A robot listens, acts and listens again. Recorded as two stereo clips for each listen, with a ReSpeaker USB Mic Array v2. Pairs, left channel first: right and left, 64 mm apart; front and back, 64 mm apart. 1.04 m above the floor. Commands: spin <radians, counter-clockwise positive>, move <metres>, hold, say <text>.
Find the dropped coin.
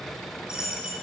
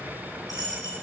spin 0.26
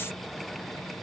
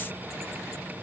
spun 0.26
say I heard a dropped coin from this way, but can't make it out now.